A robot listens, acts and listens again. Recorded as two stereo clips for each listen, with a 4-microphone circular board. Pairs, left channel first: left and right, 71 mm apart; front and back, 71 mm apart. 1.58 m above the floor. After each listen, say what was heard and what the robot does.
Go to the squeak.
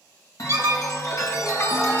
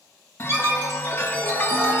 The squeak: 135° right. Turn 135° right.
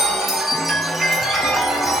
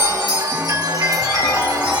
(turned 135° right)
Keep listening.
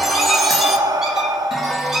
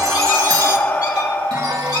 Keep listening.
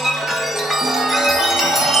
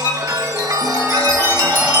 Drive 1.0 m forward.
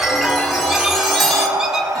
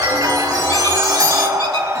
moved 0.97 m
Keep listening.
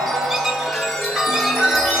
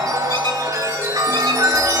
Keep listening.
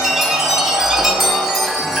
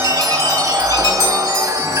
Facing where the squeak came from. I can't hear it now. I did not reach it.